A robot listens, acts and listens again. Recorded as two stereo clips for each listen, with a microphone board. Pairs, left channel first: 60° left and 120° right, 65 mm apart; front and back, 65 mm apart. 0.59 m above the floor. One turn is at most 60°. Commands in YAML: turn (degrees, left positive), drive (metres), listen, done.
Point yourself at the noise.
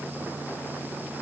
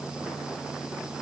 listen: true
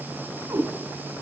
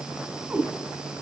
turn: -60
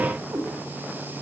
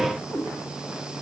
turn: -60
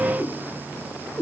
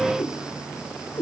done: "Facing the cat meowing."